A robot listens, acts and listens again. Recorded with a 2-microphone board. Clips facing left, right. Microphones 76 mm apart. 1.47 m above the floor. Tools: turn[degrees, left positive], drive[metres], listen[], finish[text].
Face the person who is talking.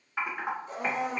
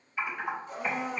Action: listen[]
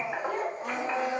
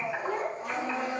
Thought: The child speaking: about 25° right or 155° right.
Action: turn[-25]
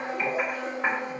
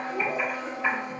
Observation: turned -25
Action: listen[]
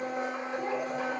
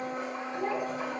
Thought: So it is at 130° right.
Action: turn[-130]
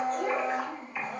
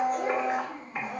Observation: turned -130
Action: finish[Found it: a child speaking, straight ahead, 1 to 2 m away.]